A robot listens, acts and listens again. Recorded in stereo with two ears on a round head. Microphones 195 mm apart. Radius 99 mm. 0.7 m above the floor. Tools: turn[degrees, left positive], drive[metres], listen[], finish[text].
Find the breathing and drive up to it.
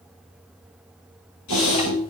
Thought: The breathing: about 65° left or 115° left.
Action: turn[65]
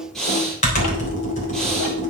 Action: drive[1.0]
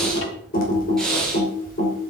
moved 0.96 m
Action: drive[1.0]
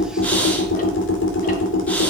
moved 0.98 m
Action: drive[1.0]
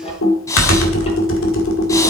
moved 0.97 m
Thought: The breathing is now 15° left.
Action: turn[15]
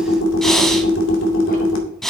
Action: drive[1.0]
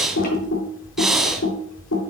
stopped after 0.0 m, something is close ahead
Action: finish[Arrived at the breathing, straight ahead.]